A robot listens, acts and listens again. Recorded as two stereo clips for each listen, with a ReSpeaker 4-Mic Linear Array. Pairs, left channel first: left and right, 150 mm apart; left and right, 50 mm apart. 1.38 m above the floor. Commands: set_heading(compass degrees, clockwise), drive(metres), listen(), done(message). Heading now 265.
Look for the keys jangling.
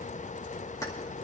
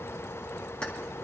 set_heading(245)
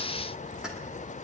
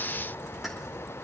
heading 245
listen()
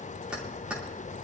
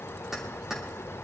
done("Facing the keys jangling.")